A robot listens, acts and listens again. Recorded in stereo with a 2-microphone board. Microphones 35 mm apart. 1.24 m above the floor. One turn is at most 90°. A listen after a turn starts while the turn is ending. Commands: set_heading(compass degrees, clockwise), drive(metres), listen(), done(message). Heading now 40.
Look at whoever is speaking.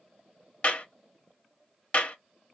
listen()
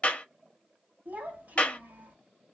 set_heading(95)
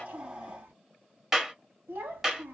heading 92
set_heading(167)
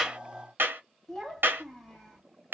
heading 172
done("Facing the child speaking, 1 to 2 m away.")